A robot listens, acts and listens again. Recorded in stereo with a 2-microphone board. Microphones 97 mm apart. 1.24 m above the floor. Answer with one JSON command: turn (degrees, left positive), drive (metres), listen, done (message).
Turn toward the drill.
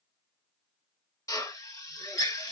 {"turn": 35}
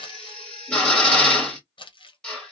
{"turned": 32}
{"turn": 10}
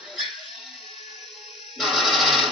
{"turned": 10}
{"done": "Facing the drill, 1 to 2 m away."}